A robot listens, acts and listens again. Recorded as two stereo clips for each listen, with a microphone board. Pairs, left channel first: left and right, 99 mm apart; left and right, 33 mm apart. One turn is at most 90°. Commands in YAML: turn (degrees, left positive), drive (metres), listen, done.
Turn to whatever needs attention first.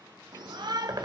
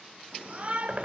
turn: -45
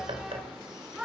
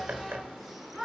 done: "Facing the shout, 1 to 2 m away."